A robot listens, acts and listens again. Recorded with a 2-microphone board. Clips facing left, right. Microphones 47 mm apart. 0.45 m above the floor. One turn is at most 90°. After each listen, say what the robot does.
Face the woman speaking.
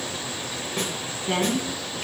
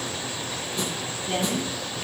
Turn 70° left.
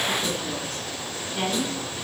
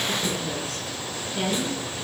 Turn 25° left.
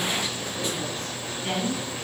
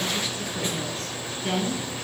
Turn 10° left.
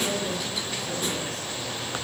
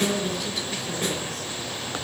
Found it: a woman speaking, straight ahead, over 4 m away.